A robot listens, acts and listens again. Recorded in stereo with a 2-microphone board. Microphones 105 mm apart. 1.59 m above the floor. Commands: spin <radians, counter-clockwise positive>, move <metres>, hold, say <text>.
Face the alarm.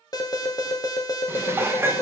spin 0.70
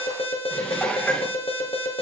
spin 1.75
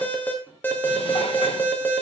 spin 0.35
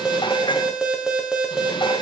say Facing the alarm, 1 to 2 m away.